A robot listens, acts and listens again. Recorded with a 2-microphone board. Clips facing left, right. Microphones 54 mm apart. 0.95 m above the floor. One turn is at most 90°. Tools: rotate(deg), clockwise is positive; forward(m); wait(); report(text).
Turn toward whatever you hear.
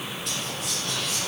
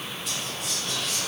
rotate(-30)
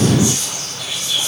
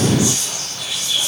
rotate(-90)
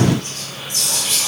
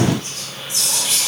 rotate(-60)
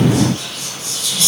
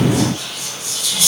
rotate(15)
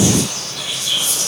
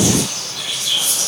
report("Facing the whispering, 1 to 2 m away.")